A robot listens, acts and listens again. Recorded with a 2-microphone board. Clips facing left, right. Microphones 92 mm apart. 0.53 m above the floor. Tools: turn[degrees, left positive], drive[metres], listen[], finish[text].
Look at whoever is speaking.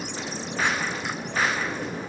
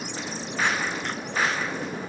Action: listen[]
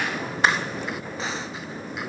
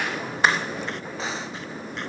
Action: listen[]
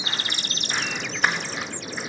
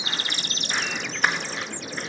Action: finish[I can't make out anyone speaking.]